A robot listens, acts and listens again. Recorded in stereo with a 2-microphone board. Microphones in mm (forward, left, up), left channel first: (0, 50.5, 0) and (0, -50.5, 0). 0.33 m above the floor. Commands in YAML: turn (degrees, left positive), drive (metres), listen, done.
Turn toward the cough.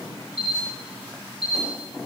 listen: true
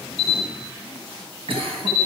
turn: -60
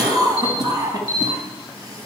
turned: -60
turn: -40
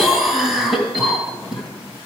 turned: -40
done: "Facing the cough."